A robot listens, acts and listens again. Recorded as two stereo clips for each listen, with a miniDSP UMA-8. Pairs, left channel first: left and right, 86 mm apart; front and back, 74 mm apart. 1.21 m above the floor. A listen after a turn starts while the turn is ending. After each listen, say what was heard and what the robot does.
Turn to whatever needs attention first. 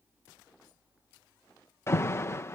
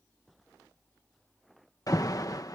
The alarm: 30° left. Turn 30° left.
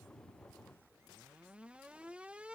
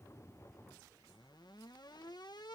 The alarm is now 15° right. Turn 15° right.
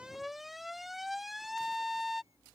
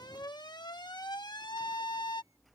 Found it: an alarm, straight ahead.